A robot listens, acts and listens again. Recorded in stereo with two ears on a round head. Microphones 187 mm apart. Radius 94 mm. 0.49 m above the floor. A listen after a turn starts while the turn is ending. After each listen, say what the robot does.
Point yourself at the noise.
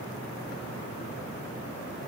Keep listening.
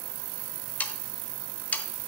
Turn 30° left.
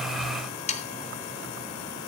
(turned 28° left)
Turn 145° left.
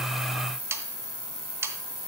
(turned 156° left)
Turn 15° right.
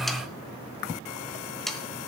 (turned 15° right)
Facing the sawing, under 1 m away.